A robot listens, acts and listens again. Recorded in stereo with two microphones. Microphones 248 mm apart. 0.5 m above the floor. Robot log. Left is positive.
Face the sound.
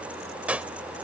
cmd yaw -30
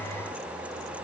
cmd idle
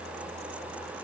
end: I heard a gunshot, but can't make it out now. It was about 25° left or 145° right.